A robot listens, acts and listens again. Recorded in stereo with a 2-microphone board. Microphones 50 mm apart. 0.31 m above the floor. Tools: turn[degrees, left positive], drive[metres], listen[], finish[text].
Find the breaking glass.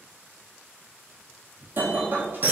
Thought: The breaking glass: about 45° right or 135° right.
Action: turn[-45]
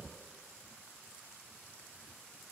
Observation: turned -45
Action: listen[]
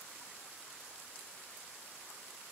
Action: finish[I heard breaking glass, but can't make it out now. It was about straight ahead or 90° right.]